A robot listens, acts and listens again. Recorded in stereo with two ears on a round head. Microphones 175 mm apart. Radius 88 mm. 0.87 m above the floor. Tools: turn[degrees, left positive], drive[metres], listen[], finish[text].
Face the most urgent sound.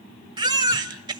Thought: The baby crying: about 25° right or 155° right.
Action: turn[-25]
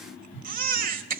Thought: So it is at 130° right.
Action: turn[-130]
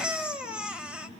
Action: finish[Facing the baby crying, 1 to 2 m away.]